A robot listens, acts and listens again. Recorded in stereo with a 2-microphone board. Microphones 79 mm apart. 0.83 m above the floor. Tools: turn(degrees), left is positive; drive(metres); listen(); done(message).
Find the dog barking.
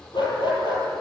turn(degrees=65)
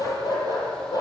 turn(degrees=50)
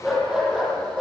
turn(degrees=-10)
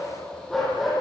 done("Facing the dog barking, over 4 m away.")